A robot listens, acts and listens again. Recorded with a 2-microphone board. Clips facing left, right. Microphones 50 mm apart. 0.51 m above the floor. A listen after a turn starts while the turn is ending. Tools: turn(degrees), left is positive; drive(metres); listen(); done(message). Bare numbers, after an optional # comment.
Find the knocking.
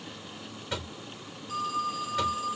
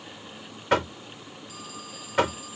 # The knocking: about 60° right or 120° right.
turn(-60)
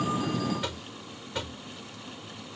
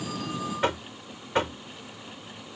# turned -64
# So it is at 50° right.
turn(-50)
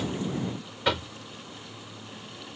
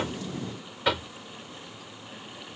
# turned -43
done("Facing the knocking.")